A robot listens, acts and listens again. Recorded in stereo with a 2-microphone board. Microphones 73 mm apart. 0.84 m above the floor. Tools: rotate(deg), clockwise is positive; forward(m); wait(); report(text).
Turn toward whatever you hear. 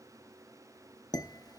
rotate(-65)
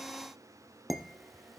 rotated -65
report("Facing the dishes clattering, under 1 m away.")